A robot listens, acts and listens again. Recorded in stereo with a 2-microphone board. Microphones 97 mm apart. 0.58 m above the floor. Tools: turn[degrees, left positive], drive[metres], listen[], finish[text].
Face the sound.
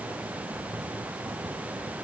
Action: listen[]
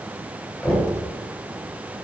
Action: turn[30]
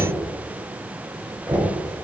Thought: So it is at 20° right.
Action: turn[-20]
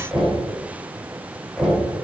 Action: finish[Facing the knocking.]